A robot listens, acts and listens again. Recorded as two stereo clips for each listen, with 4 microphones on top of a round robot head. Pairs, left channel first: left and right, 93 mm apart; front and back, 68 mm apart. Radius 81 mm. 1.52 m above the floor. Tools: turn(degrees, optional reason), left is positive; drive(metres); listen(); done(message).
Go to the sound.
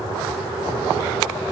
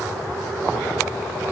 listen()
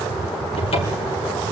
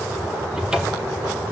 turn(degrees=105, reason="The cupboard door: 105° left.")
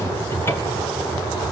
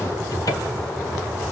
turn(degrees=30, reason="The cupboard door is now 30° left.")
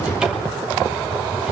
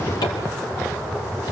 turn(degrees=-10, reason="The cupboard door is now 10° right.")
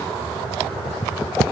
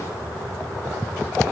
listen()
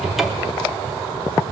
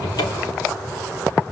drive(metres=1.0)
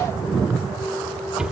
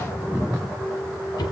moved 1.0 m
drive(metres=1.0)
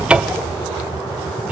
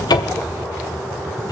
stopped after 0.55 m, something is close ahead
turn(degrees=-10, reason="The cupboard door is now 10° right.")
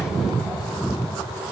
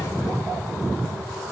listen()
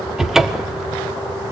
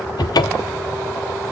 done("I am next to the cupboard door.")